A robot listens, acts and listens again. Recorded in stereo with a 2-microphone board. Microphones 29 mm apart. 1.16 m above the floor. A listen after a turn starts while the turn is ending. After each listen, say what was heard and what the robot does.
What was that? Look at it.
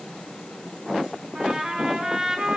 The trumpet: about 30° right or 150° right. Turn 30° right.
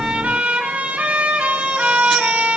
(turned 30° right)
So it is at 120° right. Turn 120° right.
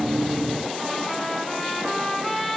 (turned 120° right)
The trumpet is now 15° left. Turn 15° left.
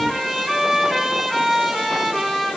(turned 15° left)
Found it: a trumpet, straight ahead.